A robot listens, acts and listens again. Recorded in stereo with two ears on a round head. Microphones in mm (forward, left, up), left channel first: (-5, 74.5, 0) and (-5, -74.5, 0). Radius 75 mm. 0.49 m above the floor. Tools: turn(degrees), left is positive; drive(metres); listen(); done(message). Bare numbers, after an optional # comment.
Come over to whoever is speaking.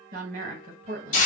# The woman speaking: about 45° right or 135° right.
turn(-45)
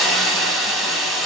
listen()
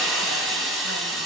listen()
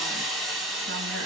done("I heard a woman speaking, but can't make it out now. It was about straight ahead or 90° right. I did not reach it.")